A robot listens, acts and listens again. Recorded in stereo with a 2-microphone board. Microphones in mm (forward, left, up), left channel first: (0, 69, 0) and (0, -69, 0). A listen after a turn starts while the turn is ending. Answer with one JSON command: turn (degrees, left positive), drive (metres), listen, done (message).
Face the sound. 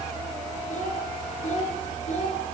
{"turn": 60}
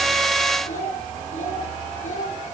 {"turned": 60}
{"turn": 60}
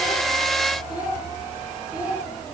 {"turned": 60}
{"done": "Facing the child speaking, over 4 m away."}